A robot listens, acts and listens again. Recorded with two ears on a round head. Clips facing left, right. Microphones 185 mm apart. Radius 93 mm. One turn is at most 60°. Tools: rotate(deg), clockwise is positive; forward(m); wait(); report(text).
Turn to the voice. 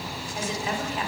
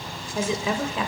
rotate(60)
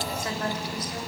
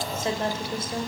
rotate(25)
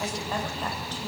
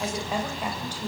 rotate(15)
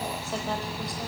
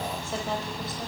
wait()
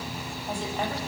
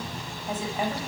report("Found it: a woman speaking, straight ahead.")